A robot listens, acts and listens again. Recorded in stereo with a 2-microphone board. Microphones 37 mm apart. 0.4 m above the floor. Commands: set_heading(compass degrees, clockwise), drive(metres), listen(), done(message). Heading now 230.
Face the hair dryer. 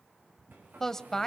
set_heading(320)
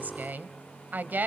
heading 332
set_heading(307)
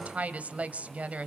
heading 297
set_heading(307)
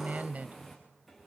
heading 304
done("Found it: a hair dryer, straight ahead.")